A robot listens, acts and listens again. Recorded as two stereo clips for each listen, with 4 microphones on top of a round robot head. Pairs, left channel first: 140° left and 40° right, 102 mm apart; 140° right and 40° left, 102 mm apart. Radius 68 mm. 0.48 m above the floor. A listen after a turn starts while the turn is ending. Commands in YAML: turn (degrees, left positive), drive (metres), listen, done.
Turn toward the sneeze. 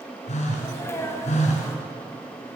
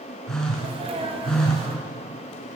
turn: 75
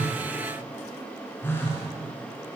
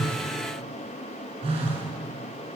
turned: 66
done: "Facing where the sneeze came from. I can't hear it now."